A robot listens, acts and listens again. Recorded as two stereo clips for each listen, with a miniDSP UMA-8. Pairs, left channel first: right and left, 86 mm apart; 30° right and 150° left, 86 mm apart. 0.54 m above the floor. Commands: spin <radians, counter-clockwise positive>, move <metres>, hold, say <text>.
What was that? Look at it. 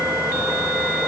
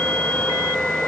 hold
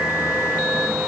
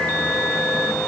hold
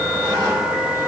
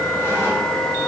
say I can't make out anything to turn to.